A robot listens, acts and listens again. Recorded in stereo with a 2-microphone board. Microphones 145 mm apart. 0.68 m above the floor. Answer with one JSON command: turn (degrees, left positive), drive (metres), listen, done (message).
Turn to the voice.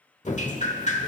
{"listen": true}
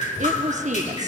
{"turn": -55}
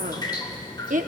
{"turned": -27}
{"turn": -85}
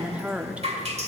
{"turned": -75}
{"turn": -10}
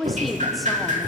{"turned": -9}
{"done": "Found it: a woman speaking, straight ahead."}